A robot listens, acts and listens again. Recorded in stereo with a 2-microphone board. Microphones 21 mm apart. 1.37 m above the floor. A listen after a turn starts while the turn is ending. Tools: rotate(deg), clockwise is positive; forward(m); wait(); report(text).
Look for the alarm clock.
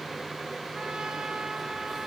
wait()
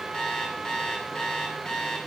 rotate(-50)
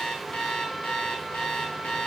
rotate(-80)
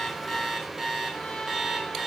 rotate(20)
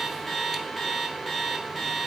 report("Facing the alarm clock, over 4 m away.")